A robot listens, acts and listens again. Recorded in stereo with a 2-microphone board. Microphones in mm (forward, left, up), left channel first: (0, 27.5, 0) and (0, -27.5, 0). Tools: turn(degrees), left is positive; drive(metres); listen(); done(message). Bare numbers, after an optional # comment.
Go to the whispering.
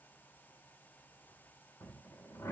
listen()
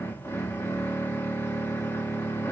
listen()
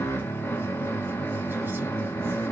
done("I can't make out whispering to turn to.")